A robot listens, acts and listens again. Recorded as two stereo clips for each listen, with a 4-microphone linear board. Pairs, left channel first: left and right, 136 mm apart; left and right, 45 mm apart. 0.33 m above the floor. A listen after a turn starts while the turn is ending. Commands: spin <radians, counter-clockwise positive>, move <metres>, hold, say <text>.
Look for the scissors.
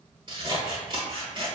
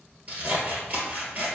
spin -0.61
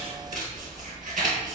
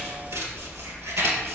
spin -1.92
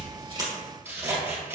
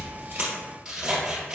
spin -0.26
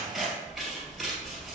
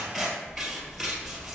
say Facing the scissors, 1 to 2 m away.